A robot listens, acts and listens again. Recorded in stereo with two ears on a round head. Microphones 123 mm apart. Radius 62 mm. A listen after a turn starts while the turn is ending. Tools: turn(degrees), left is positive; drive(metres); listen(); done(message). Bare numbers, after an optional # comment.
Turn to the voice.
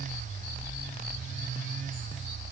listen()
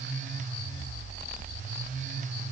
listen()
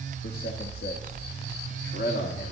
# The man speaking: about 75° left or 105° left.
turn(75)
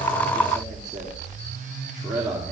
done("Facing the man speaking, 2 to 4 m away.")